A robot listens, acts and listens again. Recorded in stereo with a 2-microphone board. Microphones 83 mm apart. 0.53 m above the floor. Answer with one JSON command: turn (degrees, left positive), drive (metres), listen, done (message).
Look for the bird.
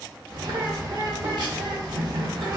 {"turn": -60}
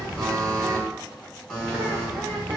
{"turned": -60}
{"turn": -25}
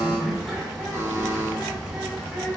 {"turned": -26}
{"done": "Facing the bird."}